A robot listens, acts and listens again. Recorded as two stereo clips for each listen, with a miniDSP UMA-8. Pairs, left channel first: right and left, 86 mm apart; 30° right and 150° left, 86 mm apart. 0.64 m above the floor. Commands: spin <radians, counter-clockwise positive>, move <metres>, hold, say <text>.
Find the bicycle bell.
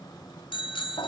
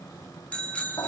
spin -1.83
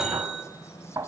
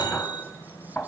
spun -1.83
say Facing the bicycle bell.